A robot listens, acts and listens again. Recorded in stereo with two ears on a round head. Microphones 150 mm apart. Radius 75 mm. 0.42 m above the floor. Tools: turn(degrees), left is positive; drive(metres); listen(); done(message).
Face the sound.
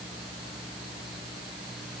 listen()
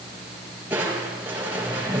turn(degrees=-30)
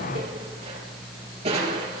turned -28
turn(degrees=-140)
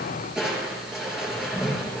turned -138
done("Facing the crushing, over 4 m away.")